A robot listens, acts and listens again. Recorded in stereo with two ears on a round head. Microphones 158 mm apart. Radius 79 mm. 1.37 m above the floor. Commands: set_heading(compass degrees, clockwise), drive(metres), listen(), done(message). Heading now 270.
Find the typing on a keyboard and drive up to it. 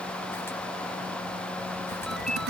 set_heading(330)
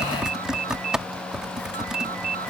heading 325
drive(1.0)
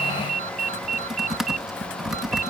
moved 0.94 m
drive(1.0)
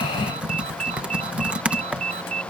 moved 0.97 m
drive(1.0)
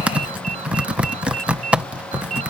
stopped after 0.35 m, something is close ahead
done("Arrived at the typing on a keyboard, straight ahead.")